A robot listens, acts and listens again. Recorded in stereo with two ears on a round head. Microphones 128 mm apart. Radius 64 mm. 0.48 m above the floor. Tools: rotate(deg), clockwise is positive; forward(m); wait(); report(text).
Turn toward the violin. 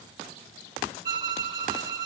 rotate(30)
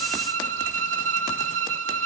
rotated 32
rotate(115)
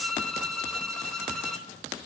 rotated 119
report("Facing the violin, under 1 m away.")